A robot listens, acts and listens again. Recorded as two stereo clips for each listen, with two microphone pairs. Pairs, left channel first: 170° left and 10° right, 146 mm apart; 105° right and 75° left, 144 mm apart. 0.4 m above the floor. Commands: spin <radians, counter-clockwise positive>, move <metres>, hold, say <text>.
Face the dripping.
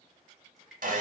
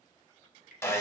spin -1.75
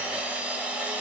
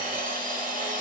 hold
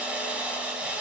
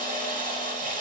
hold
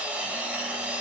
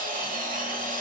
say Facing where the dripping came from. I can't hear it now.